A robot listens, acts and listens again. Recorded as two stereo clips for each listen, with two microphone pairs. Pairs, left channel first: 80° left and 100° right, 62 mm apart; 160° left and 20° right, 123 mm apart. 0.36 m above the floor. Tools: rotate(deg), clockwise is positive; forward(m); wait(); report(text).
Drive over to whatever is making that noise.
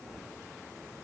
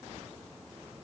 wait()
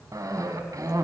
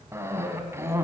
rotate(85)
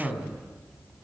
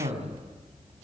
rotate(10)
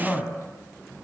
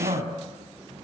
forward(1.0)
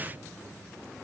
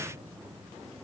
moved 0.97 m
wait()
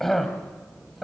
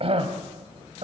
forward(1.0)
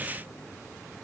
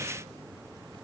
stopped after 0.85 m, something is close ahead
wait()
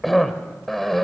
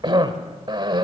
report("Arrived at the cough, straight ahead.")